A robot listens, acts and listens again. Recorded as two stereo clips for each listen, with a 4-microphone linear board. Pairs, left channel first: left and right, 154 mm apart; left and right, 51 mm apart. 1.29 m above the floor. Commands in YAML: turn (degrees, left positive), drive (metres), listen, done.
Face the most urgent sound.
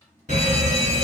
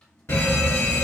turn: 55
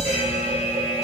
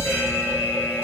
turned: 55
turn: 55
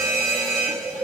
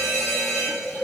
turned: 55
done: "Found it: a fire alarm, straight ahead, 1 to 2 m away."